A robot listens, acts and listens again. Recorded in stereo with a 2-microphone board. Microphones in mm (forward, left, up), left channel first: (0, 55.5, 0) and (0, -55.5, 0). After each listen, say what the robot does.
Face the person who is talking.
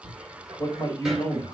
Turn 35° left.
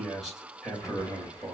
Found it: a man speaking, straight ahead, 2 to 4 m away.